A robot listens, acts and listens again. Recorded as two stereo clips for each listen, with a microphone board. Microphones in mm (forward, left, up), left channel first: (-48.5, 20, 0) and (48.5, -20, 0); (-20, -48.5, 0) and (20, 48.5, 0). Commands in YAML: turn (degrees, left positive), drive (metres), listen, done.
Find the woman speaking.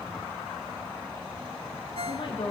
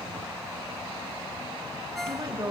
turn: 125
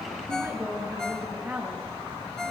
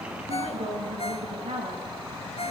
turn: 55
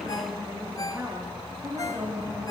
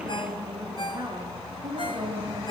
turn: 35
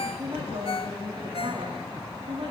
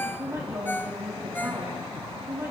done: "Found it: a woman speaking, straight ahead."